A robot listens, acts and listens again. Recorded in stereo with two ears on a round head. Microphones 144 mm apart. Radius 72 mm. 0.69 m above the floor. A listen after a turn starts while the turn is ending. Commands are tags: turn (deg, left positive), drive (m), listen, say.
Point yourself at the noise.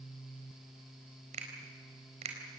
<turn deg="-40"/>
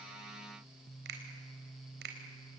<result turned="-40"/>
<turn deg="-100"/>
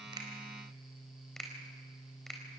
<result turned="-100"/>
<say>Facing the finger snap.</say>